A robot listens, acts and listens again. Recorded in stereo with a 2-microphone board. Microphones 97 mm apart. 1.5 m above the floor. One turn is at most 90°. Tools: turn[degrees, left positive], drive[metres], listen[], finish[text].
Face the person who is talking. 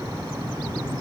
Action: listen[]
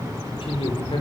Thought: The man speaking: about 65° left or 115° left.
Action: turn[65]
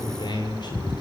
Thought: So it is at 50° left.
Action: turn[50]
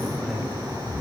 Action: listen[]
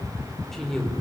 Action: finish[Facing the man speaking.]